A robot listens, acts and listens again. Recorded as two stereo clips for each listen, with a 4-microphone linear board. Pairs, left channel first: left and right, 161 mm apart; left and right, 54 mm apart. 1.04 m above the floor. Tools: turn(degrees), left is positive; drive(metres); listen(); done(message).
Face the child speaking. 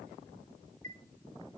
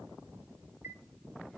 listen()
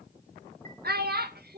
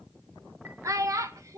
turn(degrees=-90)
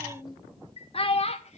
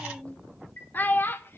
turn(degrees=40)
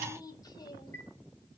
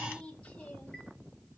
turn(degrees=25)
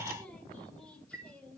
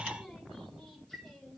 listen()
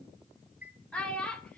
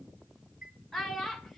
done("Found it: a child speaking, straight ahead, 2 to 4 m away.")